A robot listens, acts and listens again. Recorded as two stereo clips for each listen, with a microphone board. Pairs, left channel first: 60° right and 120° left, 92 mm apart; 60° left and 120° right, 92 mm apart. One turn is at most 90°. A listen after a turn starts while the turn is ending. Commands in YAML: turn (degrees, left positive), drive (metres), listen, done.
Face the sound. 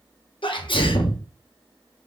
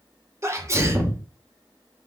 turn: -65
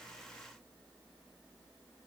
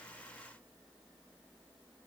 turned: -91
turn: 25
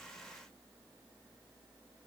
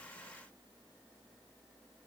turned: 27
done: "I heard a sneeze from this way, but can't make it out now."